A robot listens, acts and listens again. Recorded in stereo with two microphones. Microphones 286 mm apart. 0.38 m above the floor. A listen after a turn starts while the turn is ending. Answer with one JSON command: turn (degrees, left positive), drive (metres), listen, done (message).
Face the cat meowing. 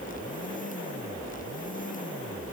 {"listen": true}
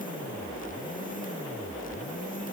{"listen": true}
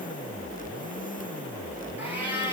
{"turn": -30}
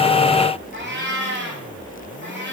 {"turn": -140}
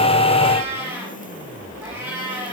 {"turn": -10}
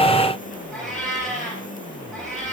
{"done": "Facing the cat meowing, over 4 m away."}